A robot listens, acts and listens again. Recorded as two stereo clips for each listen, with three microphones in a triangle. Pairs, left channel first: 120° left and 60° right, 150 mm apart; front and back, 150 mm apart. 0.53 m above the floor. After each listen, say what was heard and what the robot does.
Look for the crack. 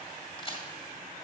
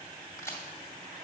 The crack: 70° left. Turn 70° left.
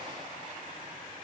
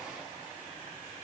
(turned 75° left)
Facing where the crack came from. I can't hear it now.